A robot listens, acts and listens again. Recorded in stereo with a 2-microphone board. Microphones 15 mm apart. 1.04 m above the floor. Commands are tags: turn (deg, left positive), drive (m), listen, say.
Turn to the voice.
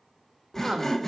<turn deg="-60"/>
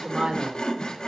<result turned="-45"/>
<turn deg="-75"/>
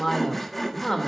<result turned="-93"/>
<turn deg="15"/>
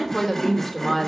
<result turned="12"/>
<say>Found it: a woman speaking, straight ahead.</say>